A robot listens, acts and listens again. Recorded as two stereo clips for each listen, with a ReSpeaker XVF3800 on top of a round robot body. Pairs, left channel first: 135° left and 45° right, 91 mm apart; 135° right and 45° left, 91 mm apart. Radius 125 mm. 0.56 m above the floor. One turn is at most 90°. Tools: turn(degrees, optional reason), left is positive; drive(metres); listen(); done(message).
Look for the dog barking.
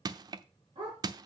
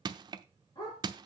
turn(degrees=-85, reason="The dog barking: 85° right.")
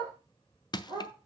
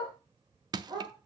done("Facing the dog barking, over 4 m away.")